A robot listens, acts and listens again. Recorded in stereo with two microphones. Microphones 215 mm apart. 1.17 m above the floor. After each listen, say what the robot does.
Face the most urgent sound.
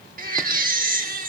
Turn 40° right.
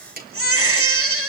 Turn 100° right.
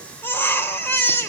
Turn 10° left.
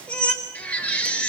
Facing the baby crying, 2 to 4 m away.